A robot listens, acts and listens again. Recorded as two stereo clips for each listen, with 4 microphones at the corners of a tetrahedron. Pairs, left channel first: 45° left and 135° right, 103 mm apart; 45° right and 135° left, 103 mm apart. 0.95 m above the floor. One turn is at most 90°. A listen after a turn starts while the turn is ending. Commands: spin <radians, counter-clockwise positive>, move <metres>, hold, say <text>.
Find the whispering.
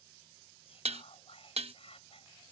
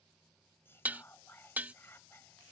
spin 0.35
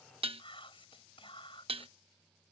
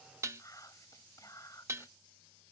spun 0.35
spin 0.17
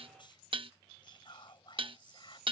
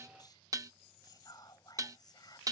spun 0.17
say Facing the whispering.